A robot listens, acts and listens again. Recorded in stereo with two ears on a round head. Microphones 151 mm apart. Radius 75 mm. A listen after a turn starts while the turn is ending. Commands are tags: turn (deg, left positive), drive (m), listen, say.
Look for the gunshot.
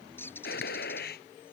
<turn deg="60"/>
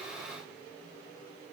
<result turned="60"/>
<listen/>
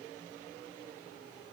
<say>I heard a gunshot, but can't make it out now. It was about straight ahead or 60° left.</say>